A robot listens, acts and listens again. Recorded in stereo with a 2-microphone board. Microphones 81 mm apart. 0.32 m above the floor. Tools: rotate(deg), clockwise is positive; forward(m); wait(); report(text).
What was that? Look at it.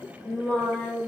rotate(-30)
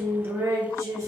rotate(35)
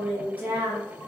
rotate(25)
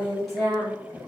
report("Facing the singing.")